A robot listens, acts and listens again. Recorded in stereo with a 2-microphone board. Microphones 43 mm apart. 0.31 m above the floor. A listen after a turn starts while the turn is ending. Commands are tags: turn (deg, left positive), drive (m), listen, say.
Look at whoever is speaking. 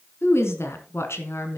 <turn deg="70"/>
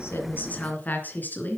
<turn deg="45"/>
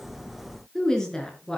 <turn deg="15"/>
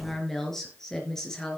<turn deg="10"/>
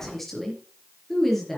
<say>Facing the woman speaking.</say>